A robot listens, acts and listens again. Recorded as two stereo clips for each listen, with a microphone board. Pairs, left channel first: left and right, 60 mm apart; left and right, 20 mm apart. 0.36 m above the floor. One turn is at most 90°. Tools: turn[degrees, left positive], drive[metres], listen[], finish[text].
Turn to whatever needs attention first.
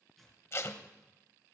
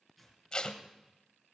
Action: listen[]
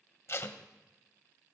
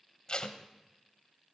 Action: listen[]
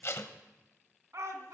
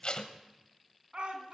Thought: The shout: about 55° right or 125° right.
Action: turn[-55]
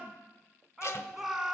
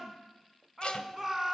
Action: finish[Facing the shout.]